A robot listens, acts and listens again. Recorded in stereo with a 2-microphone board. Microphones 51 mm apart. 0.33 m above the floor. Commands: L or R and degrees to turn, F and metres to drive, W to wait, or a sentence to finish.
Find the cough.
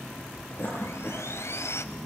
L50
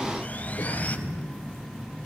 L80
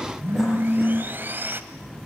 W
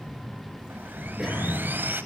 R10
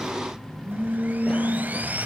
W
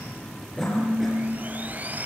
W
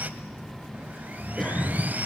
Facing the cough.